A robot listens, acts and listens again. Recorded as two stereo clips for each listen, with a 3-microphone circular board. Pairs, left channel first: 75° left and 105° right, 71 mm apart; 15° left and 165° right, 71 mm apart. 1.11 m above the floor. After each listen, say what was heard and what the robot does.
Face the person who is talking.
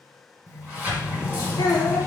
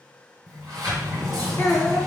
The child speaking: 65° left. Turn 65° left.
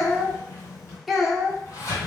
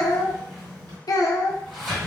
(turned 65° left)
The child speaking is now 15° right. Turn 15° right.
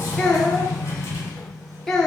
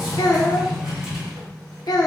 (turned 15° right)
The child speaking is now 10° right. Turn 10° right.
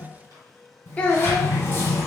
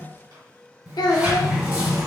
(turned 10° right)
Found it: a child speaking, straight ahead, under 1 m away.